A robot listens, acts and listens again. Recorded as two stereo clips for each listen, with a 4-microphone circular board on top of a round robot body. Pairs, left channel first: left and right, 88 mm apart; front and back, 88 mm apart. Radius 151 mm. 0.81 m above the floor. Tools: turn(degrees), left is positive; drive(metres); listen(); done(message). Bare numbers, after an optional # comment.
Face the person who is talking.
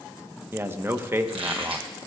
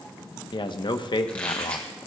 # The man speaking: 25° right.
turn(-25)
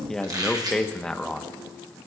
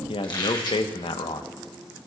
done("Found it: a man speaking, straight ahead.")